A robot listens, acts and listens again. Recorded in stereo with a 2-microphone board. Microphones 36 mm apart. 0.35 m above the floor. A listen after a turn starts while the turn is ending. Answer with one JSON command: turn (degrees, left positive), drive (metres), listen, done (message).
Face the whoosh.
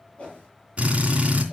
{"turn": 30}
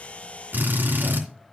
{"listen": true}
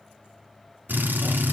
{"listen": true}
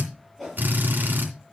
{"done": "Facing the whoosh, over 4 m away."}